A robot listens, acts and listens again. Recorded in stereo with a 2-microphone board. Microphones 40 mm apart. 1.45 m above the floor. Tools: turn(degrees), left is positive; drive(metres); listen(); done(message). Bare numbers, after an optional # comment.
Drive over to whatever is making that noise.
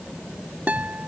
# The guitar: about 40° right or 140° right.
turn(-40)
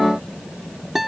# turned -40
drive(1.0)
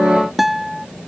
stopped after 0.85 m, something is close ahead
done("I am next to the guitar.")